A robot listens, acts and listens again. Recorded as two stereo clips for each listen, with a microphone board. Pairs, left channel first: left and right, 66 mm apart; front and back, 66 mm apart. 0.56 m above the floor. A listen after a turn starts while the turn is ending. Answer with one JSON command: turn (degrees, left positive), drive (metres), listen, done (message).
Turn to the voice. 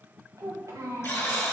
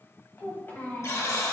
{"turn": -60}
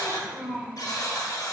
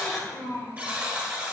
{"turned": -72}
{"done": "Found it: a child speaking, straight ahead, 2 to 4 m away."}